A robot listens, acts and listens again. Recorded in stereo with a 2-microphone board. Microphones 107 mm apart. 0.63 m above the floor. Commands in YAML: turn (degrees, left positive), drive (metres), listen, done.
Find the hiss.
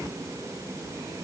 listen: true
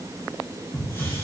turn: 25
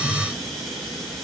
done: "Facing the hiss, over 4 m away."